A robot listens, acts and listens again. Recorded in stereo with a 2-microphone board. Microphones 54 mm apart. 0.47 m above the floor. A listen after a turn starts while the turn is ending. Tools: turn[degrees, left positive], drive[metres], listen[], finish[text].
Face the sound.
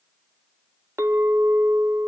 Thought: The clink: about 60° right or 120° right.
Action: turn[-60]
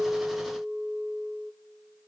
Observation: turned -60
Thought: So it is at 20° right.
Action: turn[-20]
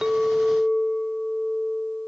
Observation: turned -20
Action: finish[Facing the clink, under 1 m away.]